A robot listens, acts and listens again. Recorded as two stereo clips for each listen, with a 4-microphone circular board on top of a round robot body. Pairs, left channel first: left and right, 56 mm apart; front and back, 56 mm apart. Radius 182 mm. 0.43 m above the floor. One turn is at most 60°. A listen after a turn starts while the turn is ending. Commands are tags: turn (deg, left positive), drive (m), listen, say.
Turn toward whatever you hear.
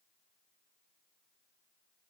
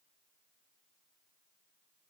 <listen/>
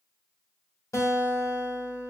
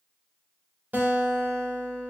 <turn deg="60"/>
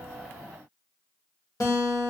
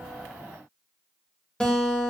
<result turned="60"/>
<turn deg="60"/>
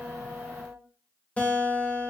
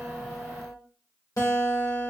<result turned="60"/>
<turn deg="25"/>
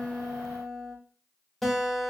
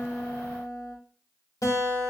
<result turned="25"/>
<say>Facing the guitar.</say>